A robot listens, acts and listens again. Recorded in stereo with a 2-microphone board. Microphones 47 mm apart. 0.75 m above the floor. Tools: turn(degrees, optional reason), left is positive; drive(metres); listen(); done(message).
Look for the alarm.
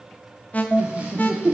turn(degrees=35, reason="The alarm: about 35° left or 145° left.")
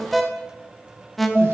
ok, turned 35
done("Facing the alarm, under 1 m away.")